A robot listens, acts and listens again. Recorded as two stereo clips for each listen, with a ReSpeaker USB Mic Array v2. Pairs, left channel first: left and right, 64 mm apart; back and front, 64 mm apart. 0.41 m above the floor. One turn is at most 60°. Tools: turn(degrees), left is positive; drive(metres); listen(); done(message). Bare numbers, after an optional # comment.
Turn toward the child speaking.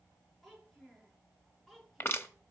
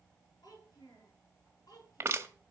# The child speaking: 175° left.
turn(60)
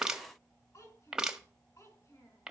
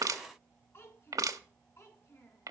# The child speaking is now 130° left.
turn(60)
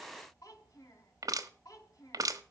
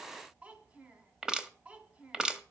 # The child speaking is now 65° left.
turn(60)
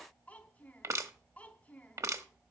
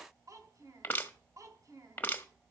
# The child speaking is now 20° left.
turn(20)
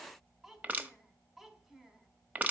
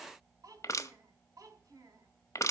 done("Facing the child speaking.")